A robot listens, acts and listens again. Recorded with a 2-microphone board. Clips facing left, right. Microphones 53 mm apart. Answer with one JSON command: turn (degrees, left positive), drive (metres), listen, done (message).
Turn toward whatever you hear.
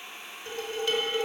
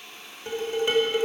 {"turn": -25}
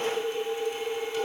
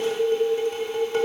{"turn": -130}
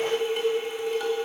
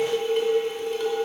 {"done": "Found it: dishes clattering, straight ahead."}